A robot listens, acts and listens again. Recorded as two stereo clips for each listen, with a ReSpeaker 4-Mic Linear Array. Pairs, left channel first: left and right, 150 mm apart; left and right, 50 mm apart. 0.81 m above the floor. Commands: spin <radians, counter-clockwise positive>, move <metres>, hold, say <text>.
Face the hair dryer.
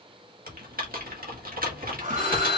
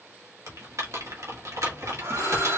spin -1.05
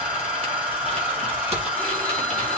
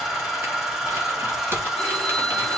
spin -0.17
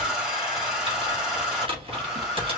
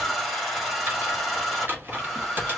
say Facing the hair dryer, 2 to 4 m away.